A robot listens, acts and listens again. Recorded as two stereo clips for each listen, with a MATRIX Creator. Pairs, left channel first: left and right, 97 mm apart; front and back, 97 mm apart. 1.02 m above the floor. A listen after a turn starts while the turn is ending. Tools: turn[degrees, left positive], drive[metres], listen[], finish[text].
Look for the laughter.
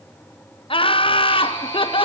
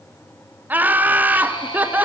Thought: The laughter: 110° left.
Action: turn[110]
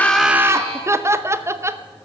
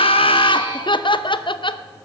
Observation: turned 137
Thought: The laughter is now 30° right.
Action: turn[-30]
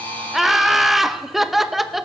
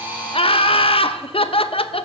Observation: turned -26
Action: finish[Facing the laughter.]